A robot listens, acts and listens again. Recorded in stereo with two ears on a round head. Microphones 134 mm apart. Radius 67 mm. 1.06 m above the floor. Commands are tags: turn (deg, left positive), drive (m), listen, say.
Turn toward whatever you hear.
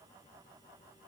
<listen/>
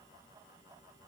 <listen/>
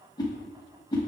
<turn deg="30"/>
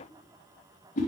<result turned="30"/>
<turn deg="120"/>
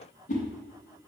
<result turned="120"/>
<turn deg="55"/>
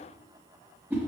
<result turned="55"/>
<turn deg="-15"/>
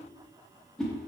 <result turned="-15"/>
<say>Found it: a whoosh, straight ahead, under 1 m away.</say>